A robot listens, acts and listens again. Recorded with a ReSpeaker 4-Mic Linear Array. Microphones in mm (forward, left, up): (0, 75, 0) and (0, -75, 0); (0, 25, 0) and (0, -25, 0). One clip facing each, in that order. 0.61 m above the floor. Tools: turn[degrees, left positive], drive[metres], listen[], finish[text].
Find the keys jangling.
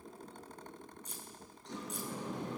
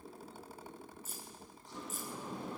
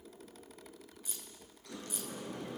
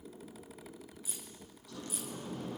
Action: turn[30]
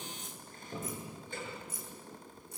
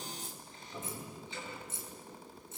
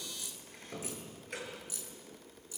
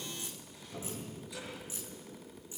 Thought: So it is at 25° right.
Action: turn[-25]
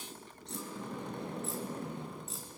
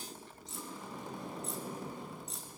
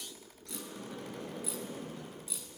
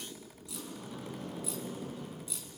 Action: finish[Found it: keys jangling, straight ahead.]